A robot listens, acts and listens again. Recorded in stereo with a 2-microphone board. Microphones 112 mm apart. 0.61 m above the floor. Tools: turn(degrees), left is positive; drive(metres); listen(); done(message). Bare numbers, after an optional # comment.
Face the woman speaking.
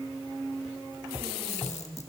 listen()
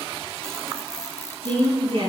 # The woman speaking: about 60° right or 120° right.
turn(-60)
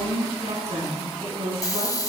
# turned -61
# So it is at 60° right.
turn(-60)
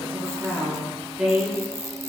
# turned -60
done("Found it: a woman speaking, straight ahead, over 4 m away.")